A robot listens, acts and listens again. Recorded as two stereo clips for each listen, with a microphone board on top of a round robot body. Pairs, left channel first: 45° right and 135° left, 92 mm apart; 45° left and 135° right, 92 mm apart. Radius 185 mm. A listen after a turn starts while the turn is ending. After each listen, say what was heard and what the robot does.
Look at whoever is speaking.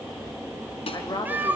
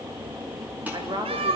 The woman speaking: 90° right. Turn 90° right.
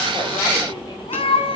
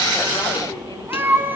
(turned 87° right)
Keep listening.
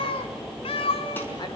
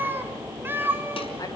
Keep listening.
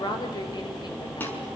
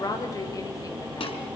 Facing the woman speaking.